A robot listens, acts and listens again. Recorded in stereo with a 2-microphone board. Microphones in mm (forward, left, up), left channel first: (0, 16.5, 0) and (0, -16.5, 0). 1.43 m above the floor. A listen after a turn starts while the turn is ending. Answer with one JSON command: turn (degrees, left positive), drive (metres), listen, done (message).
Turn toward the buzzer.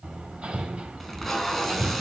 {"listen": true}
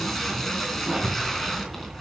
{"listen": true}
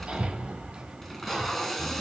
{"done": "I can't make out a buzzer to turn to."}